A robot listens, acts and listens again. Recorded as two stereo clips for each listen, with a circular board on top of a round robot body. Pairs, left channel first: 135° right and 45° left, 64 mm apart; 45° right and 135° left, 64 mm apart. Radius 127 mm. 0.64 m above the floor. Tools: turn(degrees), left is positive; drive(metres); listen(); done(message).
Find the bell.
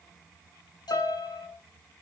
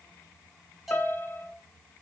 turn(degrees=-140)
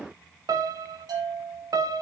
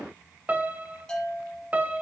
turn(degrees=35)
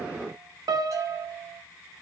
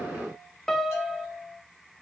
done("Found it: a bell, straight ahead, over 4 m away.")